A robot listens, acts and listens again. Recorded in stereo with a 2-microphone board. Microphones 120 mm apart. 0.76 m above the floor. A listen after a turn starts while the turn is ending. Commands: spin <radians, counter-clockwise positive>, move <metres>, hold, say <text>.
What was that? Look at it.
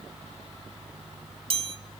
spin -0.87
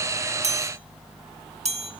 spin -1.22
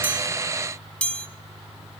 spin 0.17
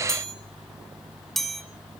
say Facing the chime.